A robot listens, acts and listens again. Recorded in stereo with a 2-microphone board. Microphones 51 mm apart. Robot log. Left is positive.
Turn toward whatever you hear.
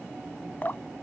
note: The dripping: about 40° left or 140° left.
cmd yaw +40
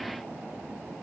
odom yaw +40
cmd idle
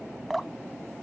end: Found it: dripping, straight ahead.